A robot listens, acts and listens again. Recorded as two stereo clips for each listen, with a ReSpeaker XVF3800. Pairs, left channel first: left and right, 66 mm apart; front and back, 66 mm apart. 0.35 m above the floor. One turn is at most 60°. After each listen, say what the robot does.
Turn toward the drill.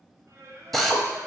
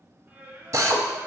Turn 60° left.
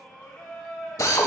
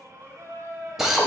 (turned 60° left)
Turn 60° left.
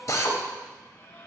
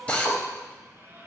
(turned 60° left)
Turn 60° left.
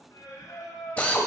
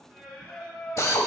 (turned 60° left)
Turn 20° left.
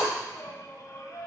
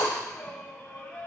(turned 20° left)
Found it: a drill, straight ahead, under 1 m away.